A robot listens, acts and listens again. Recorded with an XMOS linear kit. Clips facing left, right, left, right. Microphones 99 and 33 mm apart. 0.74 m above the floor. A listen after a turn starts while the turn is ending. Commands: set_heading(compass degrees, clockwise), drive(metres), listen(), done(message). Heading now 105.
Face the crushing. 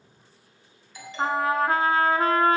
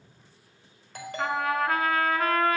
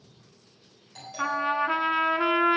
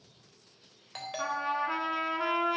listen()
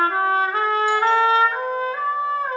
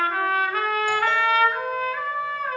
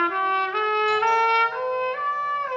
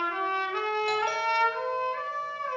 listen()
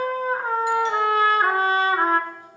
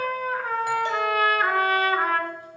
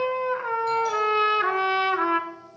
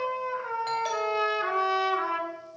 done("I can't make out crushing to turn to.")